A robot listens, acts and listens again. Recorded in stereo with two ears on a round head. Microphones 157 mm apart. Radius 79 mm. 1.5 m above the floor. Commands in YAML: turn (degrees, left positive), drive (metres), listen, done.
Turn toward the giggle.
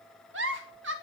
turn: -70
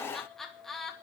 done: "Found it: a giggle, straight ahead, 2 to 4 m away."